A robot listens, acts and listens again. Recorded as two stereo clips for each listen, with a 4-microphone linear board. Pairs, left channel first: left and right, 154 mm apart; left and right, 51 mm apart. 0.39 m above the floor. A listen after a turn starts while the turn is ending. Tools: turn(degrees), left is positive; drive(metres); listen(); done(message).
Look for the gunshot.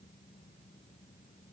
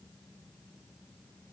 listen()
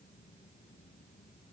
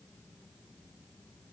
listen()
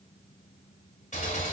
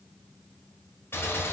turn(degrees=50)
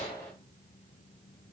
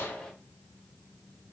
listen()
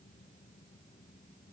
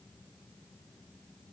done("I heard a gunshot, but can't make it out now. It was about straight ahead or 80° left.")